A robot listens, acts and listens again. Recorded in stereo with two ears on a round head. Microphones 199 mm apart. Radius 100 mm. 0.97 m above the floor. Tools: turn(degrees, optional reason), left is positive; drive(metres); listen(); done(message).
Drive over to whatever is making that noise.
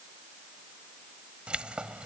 turn(degrees=-30)
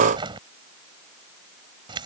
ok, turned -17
turn(degrees=-155, reason="So it is at 155° right.")
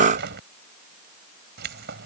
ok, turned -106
turn(degrees=-50, reason="The keys jangling is now 50° right.")
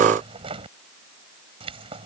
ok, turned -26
turn(degrees=-25, reason="The keys jangling is now 25° right.")
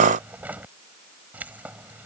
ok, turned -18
turn(degrees=-10, reason="The keys jangling is now 10° right.")
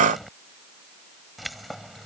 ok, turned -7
drive(metres=1.0)
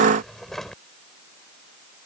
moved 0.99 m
drive(metres=1.0)
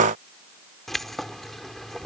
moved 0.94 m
drive(metres=1.0)
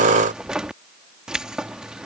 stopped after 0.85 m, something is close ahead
done("Arrived at the keys jangling, straight ahead.")